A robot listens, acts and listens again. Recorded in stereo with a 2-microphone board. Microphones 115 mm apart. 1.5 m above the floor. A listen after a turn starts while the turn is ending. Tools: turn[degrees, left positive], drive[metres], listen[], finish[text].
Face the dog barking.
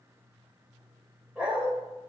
Action: turn[-30]
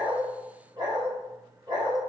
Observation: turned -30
Thought: So it is at 140° right.
Action: turn[-140]
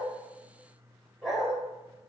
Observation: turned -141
Action: finish[Facing the dog barking.]